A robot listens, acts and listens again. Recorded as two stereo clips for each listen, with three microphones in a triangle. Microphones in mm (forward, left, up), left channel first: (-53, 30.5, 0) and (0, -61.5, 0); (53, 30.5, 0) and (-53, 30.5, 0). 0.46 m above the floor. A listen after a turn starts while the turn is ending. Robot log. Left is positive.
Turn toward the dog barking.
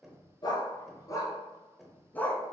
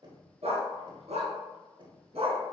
note: The dog barking: 160° right.
cmd yaw -160
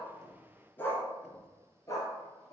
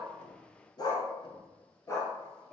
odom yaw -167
note: The dog barking is now 65° left.
cmd yaw +65
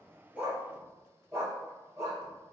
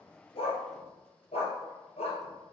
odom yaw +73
end: Facing the dog barking.